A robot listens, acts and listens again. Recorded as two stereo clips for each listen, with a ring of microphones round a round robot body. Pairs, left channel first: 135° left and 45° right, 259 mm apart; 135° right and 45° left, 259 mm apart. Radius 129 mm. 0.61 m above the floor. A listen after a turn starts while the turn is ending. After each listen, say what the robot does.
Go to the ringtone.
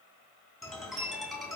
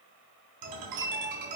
Turn 45° left.
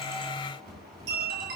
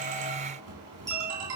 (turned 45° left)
Turn 10° left.
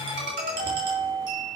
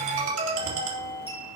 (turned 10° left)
Drive 1.0 m forward.
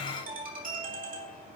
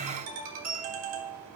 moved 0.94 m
Turn 15° left.
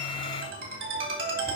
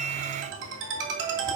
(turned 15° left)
Drive 1.0 m forward.
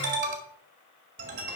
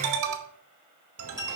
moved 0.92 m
Drive 1.0 m forward.
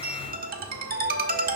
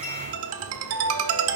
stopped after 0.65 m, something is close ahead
Turn 10° left.
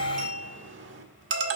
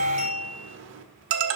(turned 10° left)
Arrived at the ringtone, straight ahead.